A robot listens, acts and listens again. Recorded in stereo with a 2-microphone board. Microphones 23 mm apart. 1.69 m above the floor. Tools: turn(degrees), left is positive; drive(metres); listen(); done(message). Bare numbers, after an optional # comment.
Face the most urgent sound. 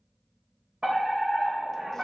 turn(-90)
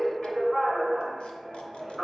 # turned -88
# So it is at 10° left.
turn(10)
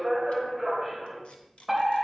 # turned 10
done("Found it: a fire alarm, straight ahead, 2 to 4 m away.")